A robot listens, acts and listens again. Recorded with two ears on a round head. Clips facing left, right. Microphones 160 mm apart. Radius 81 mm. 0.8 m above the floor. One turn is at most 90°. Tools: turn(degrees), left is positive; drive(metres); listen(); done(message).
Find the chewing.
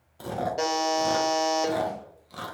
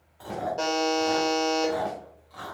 turn(degrees=45)
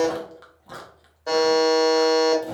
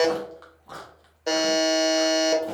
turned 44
turn(degrees=10)
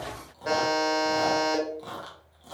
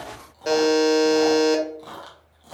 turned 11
done("Facing the chewing.")